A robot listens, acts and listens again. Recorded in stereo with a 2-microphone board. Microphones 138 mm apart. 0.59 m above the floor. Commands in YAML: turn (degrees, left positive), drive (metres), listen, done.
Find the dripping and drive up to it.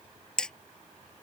listen: true
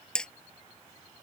listen: true
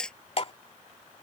turn: 45
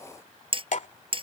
turn: 80
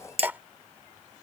turn: -15
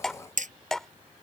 drive: 1.0
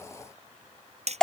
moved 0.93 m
drive: 1.0
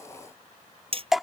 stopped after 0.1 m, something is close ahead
done: "Arrived at the dripping, straight ahead."